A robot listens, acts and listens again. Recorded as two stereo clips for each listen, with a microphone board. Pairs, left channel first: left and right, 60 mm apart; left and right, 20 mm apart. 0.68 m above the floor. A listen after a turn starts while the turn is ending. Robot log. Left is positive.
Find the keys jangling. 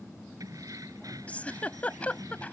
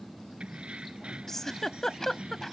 note: The keys jangling: about 75° right or 105° right.
cmd yaw -75
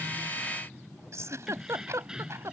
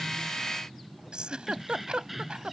note: So it is at 10° right.
cmd yaw -10
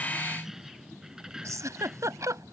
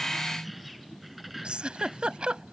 note: The keys jangling is now 15° right.
cmd yaw -15
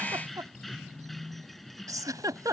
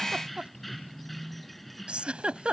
end: Found it: keys jangling, straight ahead.